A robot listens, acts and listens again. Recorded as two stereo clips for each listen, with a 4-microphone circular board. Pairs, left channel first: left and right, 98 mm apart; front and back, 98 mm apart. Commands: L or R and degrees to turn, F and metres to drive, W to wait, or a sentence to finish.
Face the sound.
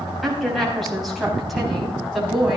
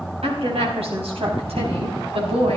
L180
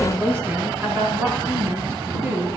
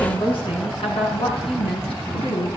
R25
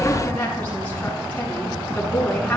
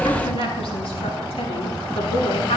L15
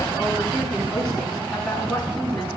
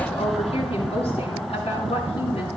Facing the woman speaking, over 4 m away.